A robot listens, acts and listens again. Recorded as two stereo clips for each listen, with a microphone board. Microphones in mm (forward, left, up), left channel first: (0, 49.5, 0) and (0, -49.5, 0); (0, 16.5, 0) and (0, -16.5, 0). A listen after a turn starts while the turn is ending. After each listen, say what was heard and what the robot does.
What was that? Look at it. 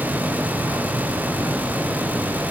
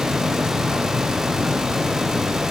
Keep listening.
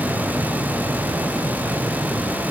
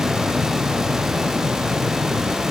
Keep listening.
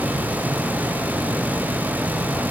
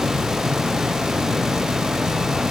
I can't make out anything.